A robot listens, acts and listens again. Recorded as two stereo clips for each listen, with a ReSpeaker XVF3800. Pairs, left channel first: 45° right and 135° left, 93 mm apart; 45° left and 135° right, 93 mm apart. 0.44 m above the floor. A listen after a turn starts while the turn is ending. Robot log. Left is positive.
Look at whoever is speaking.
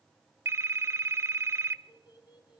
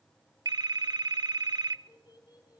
end: Found it: a child speaking, straight ahead, over 4 m away.